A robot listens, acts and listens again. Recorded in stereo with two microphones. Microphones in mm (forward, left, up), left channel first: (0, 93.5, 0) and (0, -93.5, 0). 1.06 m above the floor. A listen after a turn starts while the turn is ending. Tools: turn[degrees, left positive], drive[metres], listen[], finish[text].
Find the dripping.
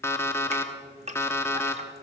Thought: The dripping: about 35° right or 145° right.
Action: turn[-35]
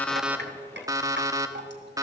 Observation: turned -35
Thought: So it is at 110° right.
Action: turn[-110]
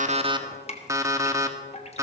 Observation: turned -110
Thought: The dripping is now 35° left.
Action: turn[35]
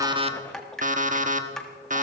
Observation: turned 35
Action: finish[Found it: dripping, straight ahead, 1 to 2 m away.]